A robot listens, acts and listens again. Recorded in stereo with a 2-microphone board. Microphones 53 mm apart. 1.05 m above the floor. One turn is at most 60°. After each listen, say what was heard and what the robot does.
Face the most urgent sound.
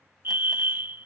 The fire alarm: about 45° right or 135° right. Turn 45° right.
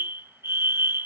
So it is at 75° right. Turn 60° right.
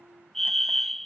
The fire alarm is now 10° left. Turn 10° left.
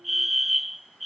Facing the fire alarm.